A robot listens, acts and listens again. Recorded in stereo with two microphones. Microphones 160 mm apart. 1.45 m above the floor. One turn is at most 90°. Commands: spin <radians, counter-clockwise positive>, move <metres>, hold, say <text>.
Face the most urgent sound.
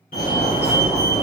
spin 1.05
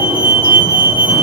spin 0.61
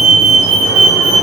say Found it: a fire alarm, straight ahead, 1 to 2 m away.